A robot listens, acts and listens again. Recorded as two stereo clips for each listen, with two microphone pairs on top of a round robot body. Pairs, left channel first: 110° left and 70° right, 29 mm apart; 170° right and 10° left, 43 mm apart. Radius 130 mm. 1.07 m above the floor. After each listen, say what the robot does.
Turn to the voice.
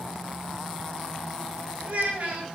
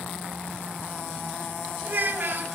Turn 30° right.
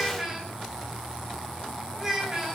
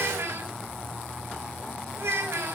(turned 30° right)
Facing the child speaking.